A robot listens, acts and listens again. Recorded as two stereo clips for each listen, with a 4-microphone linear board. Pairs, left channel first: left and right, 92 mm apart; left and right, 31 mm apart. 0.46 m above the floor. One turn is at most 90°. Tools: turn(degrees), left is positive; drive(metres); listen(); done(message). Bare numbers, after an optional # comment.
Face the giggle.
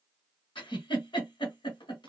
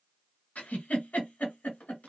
# The giggle: about 60° left or 120° left.
turn(60)
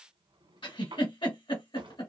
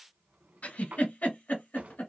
# So it is at 60° left.
turn(60)
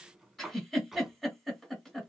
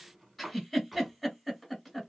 done("Found it: a giggle, straight ahead.")